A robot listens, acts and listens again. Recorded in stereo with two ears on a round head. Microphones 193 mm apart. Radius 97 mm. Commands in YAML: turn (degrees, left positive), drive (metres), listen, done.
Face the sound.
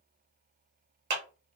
turn: -55
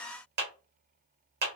turn: -60
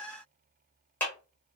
turn: 10
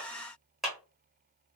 done: "Facing the clap, 1 to 2 m away."